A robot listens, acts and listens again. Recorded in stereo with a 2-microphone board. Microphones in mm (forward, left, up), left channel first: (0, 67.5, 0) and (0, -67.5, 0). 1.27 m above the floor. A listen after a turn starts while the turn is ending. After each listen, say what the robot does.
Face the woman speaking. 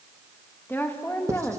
Turn 20° left.
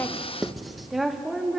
Turn 30° left.
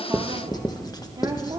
Turn 30° right.
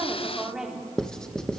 Found it: a woman speaking, straight ahead.